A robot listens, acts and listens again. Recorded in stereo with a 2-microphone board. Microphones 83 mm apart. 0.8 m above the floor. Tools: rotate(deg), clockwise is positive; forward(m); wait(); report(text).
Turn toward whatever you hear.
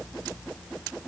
wait()
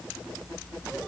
wait()
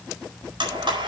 rotate(70)
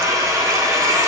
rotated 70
rotate(40)
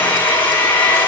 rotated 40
rotate(-20)
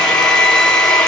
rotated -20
rotate(-10)
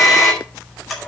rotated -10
report("Found it: a blender, straight ahead, over 4 m away.")